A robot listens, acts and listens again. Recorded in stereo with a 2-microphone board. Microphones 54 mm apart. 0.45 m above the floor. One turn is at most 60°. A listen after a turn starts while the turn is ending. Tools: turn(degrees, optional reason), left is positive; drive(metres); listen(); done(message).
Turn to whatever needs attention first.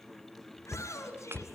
turn(degrees=60, reason="The shout: about 65° left or 115° left.")
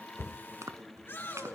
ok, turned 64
turn(degrees=50, reason="So it is at 50° left.")
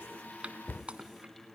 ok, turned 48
listen()
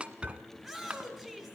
done("Found it: a shout, straight ahead.")